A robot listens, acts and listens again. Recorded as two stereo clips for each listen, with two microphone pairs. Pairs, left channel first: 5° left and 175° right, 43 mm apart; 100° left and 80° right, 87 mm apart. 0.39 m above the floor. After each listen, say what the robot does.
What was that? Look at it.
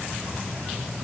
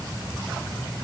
Keep listening.
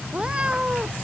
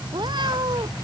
Turn 110° right.
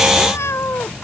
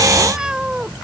Facing the cat meowing.